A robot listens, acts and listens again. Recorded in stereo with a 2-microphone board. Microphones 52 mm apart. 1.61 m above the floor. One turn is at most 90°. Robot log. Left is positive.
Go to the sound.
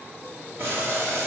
note: The boiling: about 50° right or 130° right.
cmd yaw -50
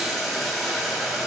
cmd fwd 1.0
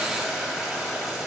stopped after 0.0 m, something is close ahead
note: The boiling is now 10° right.
cmd yaw -10
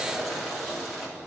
end: Something is in my way. I am facing the boiling but have not reached it.